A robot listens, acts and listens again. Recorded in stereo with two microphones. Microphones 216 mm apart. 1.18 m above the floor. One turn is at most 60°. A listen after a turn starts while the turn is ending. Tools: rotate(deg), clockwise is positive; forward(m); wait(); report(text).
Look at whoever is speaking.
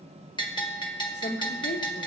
rotate(-55)
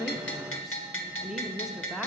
report("Found it: a woman speaking, straight ahead.")